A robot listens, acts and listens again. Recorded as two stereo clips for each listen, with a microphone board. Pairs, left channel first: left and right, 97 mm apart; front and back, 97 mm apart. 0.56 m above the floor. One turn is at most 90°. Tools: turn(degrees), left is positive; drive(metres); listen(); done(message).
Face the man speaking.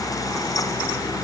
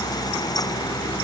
listen()
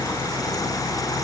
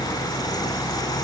listen()
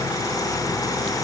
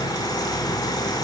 done("I can't make out a man speaking to turn to.")